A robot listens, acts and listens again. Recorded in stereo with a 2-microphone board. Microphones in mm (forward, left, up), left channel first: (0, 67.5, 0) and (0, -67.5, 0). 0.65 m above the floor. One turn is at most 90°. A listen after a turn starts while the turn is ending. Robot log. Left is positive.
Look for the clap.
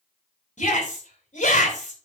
cmd idle
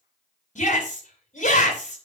cmd idle
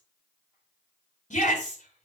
end: I can't make out a clap, only a shout.